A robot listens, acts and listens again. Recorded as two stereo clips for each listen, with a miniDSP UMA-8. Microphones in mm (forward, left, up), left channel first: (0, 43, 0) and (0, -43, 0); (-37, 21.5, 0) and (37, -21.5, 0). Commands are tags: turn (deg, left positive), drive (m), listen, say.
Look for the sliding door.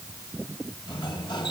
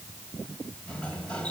<turn deg="75"/>
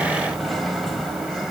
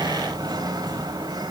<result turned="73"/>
<say>Found it: a sliding door, straight ahead, 1 to 2 m away.</say>